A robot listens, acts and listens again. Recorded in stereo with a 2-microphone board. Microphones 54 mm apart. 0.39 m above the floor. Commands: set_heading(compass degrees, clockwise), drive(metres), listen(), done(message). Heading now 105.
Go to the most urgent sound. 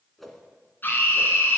set_heading(65)
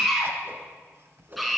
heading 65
drive(1.0)
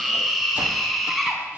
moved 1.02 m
drive(1.0)
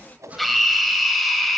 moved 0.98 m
drive(1.0)
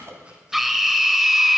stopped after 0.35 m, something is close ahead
done("I am next to the scream.")